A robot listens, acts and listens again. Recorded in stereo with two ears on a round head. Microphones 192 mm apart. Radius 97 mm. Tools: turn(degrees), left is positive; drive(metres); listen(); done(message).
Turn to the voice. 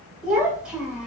turn(degrees=-30)
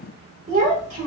turn(degrees=-145)
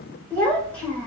turn(degrees=10)
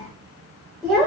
done("Facing the child speaking.")